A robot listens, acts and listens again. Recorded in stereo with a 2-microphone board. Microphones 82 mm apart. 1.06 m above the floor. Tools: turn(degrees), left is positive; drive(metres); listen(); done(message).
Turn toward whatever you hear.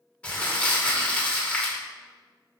turn(degrees=30)
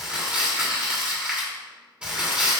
turn(degrees=-15)
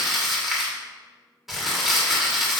done("Found it: crumpling, straight ahead.")